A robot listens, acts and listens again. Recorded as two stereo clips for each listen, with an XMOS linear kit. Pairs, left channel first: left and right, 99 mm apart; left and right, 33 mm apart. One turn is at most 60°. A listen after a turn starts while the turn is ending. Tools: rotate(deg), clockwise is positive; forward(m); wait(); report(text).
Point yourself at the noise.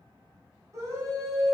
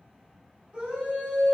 rotate(30)
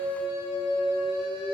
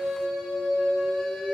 rotate(10)
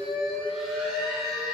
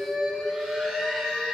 report("Found it: a scream, straight ahead.")